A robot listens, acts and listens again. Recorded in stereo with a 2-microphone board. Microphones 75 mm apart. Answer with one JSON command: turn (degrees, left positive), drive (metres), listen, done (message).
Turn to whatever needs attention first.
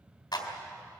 {"listen": true}
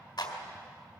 {"listen": true}
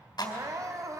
{"turn": -50}
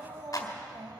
{"turn": -80}
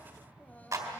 {"turn": 25}
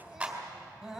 {"done": "Facing the crying."}